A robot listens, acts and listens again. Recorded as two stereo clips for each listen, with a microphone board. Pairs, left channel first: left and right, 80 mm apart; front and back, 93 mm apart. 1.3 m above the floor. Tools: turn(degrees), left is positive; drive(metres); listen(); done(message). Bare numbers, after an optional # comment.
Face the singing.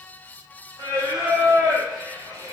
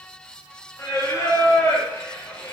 # The singing: 70° right.
turn(-70)
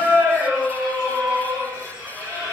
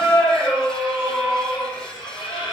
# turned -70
# The singing is now 15° right.
turn(-15)
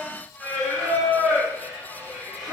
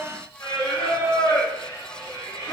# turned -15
done("Facing the singing.")